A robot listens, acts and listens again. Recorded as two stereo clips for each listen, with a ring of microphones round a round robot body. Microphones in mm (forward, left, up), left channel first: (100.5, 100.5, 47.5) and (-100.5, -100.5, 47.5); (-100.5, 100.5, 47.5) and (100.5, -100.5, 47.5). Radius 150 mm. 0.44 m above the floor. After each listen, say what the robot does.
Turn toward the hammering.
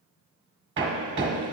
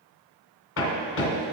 Turn 180° left.
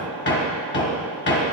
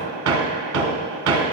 Found it: hammering, straight ahead.